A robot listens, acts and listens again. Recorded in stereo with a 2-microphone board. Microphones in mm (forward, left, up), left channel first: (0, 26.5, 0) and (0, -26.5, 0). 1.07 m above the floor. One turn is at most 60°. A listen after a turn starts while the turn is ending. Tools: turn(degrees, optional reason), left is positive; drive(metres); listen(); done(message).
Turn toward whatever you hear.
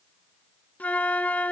turn(degrees=30, reason="The flute: about 30° left or 150° left.")
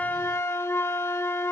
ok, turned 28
turn(degrees=60, reason="So it is at 120° left.")
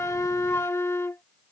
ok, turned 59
turn(degrees=60, reason="The flute is now 65° left.")
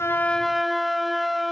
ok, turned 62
done("Found it: a flute, straight ahead.")